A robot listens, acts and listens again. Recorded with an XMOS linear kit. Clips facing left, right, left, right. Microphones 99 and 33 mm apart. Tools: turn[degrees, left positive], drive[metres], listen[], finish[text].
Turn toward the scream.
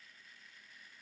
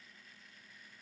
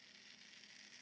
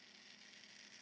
Action: listen[]
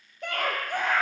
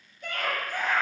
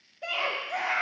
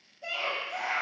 Thought: The scream: about 60° left or 120° left.
Action: turn[60]
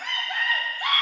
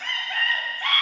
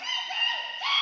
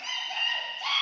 Thought: So it is at 15° left.
Action: turn[15]
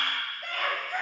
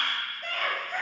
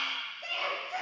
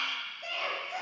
Action: finish[Facing the scream, 1 to 2 m away.]